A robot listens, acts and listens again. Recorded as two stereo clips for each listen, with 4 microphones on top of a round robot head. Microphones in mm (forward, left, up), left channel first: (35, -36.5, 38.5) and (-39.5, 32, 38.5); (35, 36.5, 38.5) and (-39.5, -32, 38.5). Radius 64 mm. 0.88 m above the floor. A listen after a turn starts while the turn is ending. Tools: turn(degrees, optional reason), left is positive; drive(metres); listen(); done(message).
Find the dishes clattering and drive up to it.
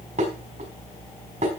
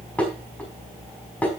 turn(degrees=120, reason="The dishes clattering: 120° left.")
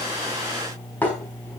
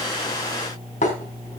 turn(degrees=35, reason="The dishes clattering is now 35° left.")
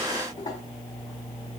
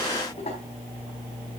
listen()
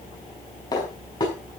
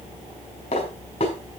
turn(degrees=10, reason="The dishes clattering is now 10° left.")
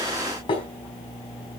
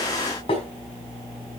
drive(metres=1.0)
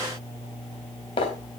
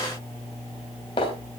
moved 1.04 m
drive(metres=1.0)
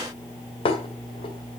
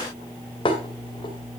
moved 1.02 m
drive(metres=1.0)
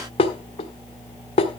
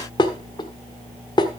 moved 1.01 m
drive(metres=1.0)
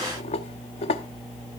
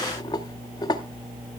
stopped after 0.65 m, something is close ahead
turn(degrees=-10, reason="The dishes clattering is now 10° right.")
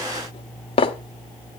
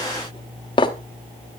done("Arrived at the dishes clattering, straight ahead.")